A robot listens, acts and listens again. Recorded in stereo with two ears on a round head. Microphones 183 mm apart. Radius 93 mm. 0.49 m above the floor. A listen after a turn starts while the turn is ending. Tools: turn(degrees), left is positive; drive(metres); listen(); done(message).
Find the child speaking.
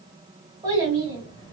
turn(degrees=-20)
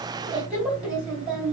done("Found it: a child speaking, straight ahead, 1 to 2 m away.")